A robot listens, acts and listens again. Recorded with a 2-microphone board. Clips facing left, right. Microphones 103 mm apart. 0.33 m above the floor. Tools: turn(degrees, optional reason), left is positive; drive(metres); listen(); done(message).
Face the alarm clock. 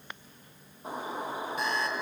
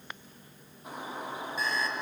turn(degrees=65, reason="The alarm clock: about 65° left or 115° left.")
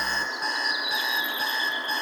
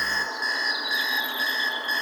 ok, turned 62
turn(degrees=50, reason="So it is at 50° left.")
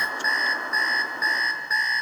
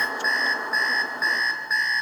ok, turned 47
done("Found it: an alarm clock, straight ahead, 2 to 4 m away.")